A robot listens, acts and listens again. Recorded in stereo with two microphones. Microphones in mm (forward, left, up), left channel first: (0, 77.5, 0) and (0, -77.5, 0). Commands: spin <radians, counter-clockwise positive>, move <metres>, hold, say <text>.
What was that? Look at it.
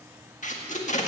spin 0.96
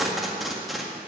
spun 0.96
say Facing the tape being pulled.